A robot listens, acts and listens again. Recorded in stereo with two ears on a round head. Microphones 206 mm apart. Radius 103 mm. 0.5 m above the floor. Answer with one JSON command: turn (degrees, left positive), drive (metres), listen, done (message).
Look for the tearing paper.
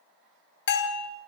{"listen": true}
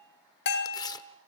{"turn": 15}
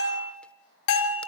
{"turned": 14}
{"listen": true}
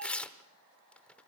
{"done": "Facing the tearing paper, under 1 m away."}